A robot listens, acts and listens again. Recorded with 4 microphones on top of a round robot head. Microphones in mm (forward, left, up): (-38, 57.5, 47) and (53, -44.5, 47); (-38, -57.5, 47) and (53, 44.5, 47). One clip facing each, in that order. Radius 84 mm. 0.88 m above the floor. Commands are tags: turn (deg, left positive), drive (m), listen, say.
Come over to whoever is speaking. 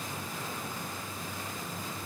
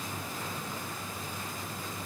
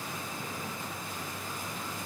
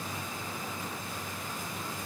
<listen/>
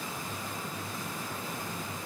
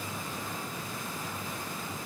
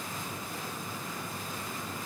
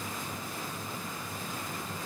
<listen/>
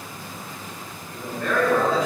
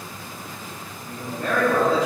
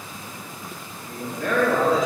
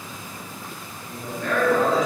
<turn deg="-105"/>
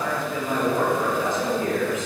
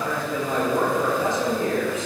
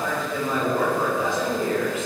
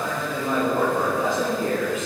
<drive m="1.0"/>
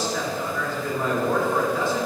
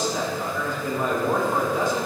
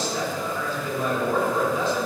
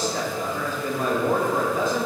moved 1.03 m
<turn deg="25"/>
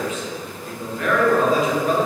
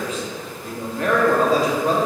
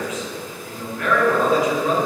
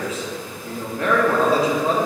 <drive m="1.0"/>
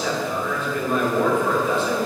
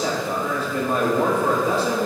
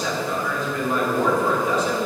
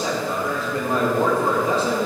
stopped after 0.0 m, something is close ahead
<say>I am next to the man speaking.</say>